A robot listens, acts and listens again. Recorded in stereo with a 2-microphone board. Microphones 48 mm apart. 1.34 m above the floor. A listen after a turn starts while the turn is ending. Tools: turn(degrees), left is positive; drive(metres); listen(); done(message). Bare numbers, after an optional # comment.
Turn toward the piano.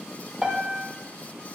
# The piano: about 20° right or 160° right.
turn(-20)
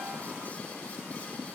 # So it is at 140° right.
turn(-140)
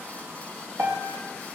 # The piano is now 60° right.
turn(-60)
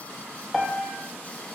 done("Found it: a piano, straight ahead.")